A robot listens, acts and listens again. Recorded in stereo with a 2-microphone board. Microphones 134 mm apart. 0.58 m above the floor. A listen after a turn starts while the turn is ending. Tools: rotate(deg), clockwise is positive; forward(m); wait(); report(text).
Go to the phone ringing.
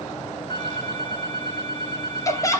rotate(-35)
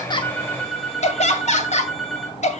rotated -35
forward(1.0)
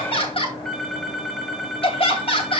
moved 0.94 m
forward(1.0)
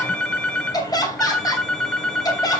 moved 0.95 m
forward(1.0)
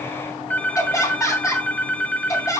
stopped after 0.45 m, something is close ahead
rotate(-15)
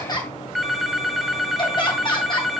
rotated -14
report("I am next to the phone ringing.")